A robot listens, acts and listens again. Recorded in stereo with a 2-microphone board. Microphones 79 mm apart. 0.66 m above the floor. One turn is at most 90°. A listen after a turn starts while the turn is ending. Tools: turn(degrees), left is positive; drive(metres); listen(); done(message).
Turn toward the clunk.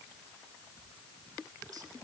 listen()
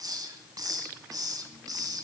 listen()
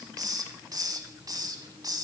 done("I can't make out a clunk to turn to.")